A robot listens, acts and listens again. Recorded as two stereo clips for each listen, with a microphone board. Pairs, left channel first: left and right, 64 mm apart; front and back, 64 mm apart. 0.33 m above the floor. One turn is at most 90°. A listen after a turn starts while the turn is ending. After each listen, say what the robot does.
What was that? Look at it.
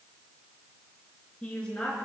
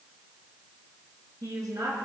Turn 90° left.
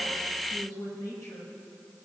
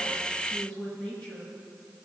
Turn 75° left.
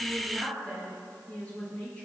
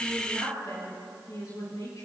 Turn 25° left.
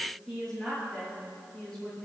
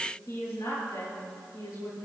Turn 10° left.
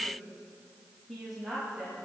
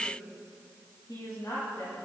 Found it: a woman speaking, straight ahead, over 4 m away.